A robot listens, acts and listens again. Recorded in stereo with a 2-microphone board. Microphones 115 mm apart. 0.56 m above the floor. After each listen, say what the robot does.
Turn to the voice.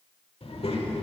Turn 55° left.
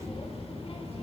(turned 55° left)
Turn 65° left.
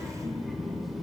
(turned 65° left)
Found it: a child speaking, straight ahead, 1 to 2 m away.